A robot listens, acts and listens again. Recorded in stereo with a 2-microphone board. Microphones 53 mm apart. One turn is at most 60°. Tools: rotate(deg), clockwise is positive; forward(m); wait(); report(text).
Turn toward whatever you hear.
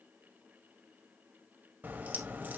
rotate(35)
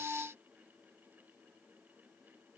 wait()
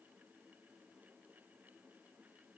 report("I heard a crack, but can't make it out now. It was about straight ahead or 110° right.")